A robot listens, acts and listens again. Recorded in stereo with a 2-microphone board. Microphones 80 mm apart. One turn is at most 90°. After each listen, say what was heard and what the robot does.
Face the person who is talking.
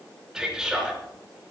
Turn 30° right.
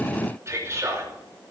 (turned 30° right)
So it is at 145° right. Turn 90° right.
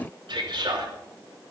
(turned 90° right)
The man speaking is now 85° right. Turn 85° right.
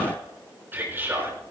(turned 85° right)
The man speaking is now 30° right. Turn 30° right.
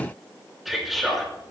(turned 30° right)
Found it: a man speaking, straight ahead.